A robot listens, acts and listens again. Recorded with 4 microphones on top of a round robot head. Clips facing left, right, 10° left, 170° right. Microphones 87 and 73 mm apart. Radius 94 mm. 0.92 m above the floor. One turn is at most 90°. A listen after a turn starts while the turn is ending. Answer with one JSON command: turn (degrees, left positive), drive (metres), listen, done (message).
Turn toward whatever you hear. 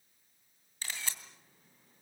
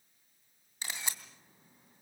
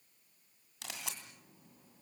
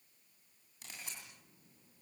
{"turn": -15}
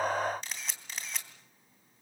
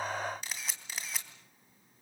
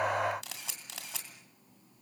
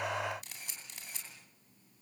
{"done": "Found it: a camera shutter, straight ahead, 2 to 4 m away."}